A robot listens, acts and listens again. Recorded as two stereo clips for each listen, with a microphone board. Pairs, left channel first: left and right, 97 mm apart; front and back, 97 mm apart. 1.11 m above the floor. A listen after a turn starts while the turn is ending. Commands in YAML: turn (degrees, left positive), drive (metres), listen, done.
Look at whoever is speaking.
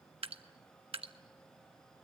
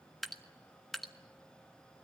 listen: true
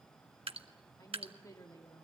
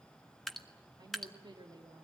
turn: 145
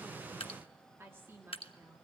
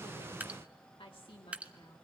turn: -25
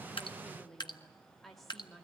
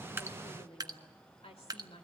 done: "Facing the woman speaking, 2 to 4 m away."